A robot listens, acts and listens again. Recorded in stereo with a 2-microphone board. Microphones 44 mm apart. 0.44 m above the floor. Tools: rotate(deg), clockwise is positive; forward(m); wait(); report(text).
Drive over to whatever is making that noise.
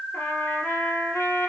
rotate(-90)
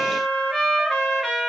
forward(1.0)
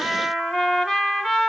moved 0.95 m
forward(1.0)
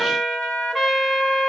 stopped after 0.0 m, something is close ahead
report("I am next to the trumpet.")